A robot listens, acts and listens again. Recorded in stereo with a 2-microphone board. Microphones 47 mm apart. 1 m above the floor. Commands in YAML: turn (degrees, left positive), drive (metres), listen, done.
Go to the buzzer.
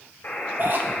turn: 50
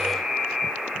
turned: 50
drive: 1.0
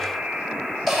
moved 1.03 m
drive: 1.0
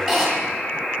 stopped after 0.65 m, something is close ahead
turn: 15
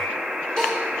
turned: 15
done: "I am next to the buzzer."